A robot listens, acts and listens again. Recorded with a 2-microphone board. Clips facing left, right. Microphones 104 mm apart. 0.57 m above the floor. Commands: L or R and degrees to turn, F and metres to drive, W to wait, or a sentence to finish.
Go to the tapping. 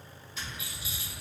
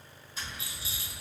R40
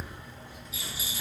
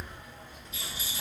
R90
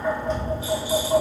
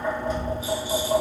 F1.0
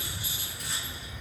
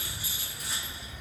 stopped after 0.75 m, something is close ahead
R10
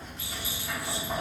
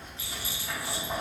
I am next to the tapping.